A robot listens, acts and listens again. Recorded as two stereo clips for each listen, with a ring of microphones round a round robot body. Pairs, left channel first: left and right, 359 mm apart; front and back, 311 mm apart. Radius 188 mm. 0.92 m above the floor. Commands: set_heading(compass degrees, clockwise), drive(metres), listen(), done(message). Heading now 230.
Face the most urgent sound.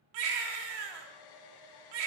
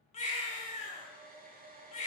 set_heading(300)
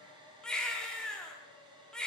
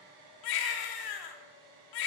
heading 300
done("Facing the baby crying, 1 to 2 m away.")